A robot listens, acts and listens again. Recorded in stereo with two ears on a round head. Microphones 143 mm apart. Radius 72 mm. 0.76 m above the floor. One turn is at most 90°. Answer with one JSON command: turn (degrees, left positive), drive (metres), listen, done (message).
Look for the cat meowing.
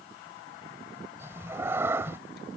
{"turn": -15}
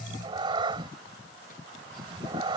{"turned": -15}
{"turn": -90}
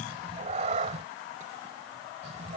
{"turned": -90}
{"turn": -40}
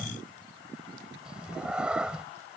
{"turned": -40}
{"done": "Found it: a cat meowing, straight ahead."}